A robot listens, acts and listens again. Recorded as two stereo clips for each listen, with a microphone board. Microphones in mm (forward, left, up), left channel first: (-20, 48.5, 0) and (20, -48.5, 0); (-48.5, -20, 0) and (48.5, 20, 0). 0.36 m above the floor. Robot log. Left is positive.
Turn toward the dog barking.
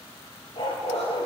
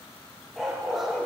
note: The dog barking: 110° left.
cmd yaw +110
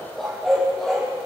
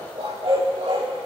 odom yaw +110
note: The dog barking is now 20° left.
cmd yaw +20
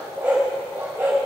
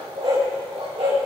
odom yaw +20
end: Found it: a dog barking, straight ahead, over 4 m away.